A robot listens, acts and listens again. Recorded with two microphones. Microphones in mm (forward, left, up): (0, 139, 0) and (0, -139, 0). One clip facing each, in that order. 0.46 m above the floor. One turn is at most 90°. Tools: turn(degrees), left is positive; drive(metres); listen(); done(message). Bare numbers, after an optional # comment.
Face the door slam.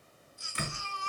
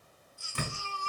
# The door slam: about 50° right or 130° right.
turn(-50)
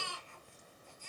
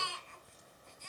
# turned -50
listen()
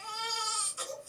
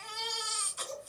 done("I heard a door slam, but can't make it out now. It was about straight ahead or 80° right.")